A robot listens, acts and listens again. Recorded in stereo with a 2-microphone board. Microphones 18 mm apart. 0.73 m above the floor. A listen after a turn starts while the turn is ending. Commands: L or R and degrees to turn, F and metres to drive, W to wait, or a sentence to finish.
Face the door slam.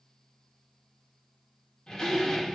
L45
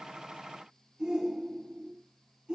W
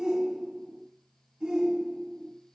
I heard a door slam, but can't make it out now. It was about straight ahead or 90° left.